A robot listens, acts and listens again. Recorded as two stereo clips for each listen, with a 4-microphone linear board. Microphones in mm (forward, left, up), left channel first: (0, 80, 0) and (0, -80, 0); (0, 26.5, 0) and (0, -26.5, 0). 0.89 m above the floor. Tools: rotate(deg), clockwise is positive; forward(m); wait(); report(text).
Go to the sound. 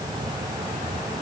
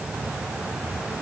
wait()
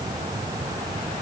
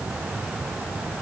wait()
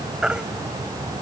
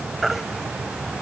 rotate(30)
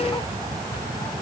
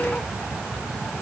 wait()
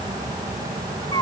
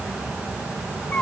rotate(-25)
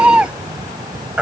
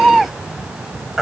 forward(1.0)
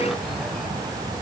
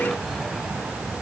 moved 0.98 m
wait()
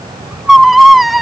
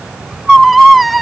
forward(1.0)
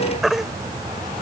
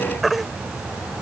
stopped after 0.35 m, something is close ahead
report("Something is in my way. I am facing the baby crying but have not reached it.")